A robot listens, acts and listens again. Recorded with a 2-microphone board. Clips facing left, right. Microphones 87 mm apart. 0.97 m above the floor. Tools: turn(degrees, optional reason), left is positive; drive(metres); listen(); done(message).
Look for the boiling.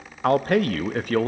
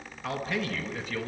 listen()
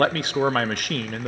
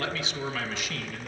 listen()
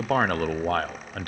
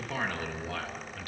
done("I can't make out boiling to turn to.")